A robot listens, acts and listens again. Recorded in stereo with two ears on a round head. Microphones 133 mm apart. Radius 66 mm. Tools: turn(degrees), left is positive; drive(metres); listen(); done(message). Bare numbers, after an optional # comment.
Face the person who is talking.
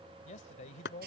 # The man speaking: about 50° left or 130° left.
turn(50)
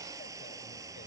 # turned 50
listen()
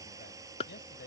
# So it is at 75° left.
turn(75)
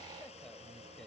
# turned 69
listen()
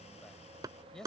done("Facing the man speaking.")